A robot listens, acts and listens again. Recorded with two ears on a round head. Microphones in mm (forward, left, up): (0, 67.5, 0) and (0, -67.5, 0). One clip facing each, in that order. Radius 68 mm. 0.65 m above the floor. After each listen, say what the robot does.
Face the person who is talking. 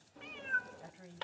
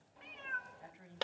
Turn 35° left.
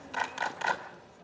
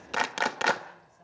Keep listening.
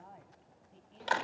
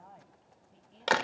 Found it: a woman speaking, straight ahead.